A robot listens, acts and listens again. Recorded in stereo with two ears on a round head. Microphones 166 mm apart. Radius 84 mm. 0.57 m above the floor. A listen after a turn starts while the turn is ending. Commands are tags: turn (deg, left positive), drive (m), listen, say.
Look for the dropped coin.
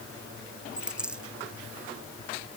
<turn deg="-30"/>
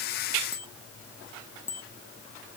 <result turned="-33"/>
<listen/>
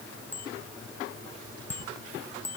<say>I heard a dropped coin, but can't make it out now. It was about 30° left or 140° right.</say>